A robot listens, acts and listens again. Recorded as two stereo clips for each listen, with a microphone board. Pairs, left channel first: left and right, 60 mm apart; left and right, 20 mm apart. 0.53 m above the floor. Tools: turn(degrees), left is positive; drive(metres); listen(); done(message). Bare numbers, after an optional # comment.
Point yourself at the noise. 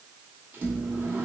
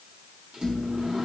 # The microwave: about 35° right or 145° right.
turn(-35)
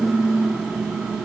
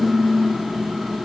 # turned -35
# So it is at 10° right.
turn(-10)
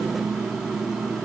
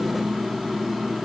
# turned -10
done("Found it: a microwave, straight ahead.")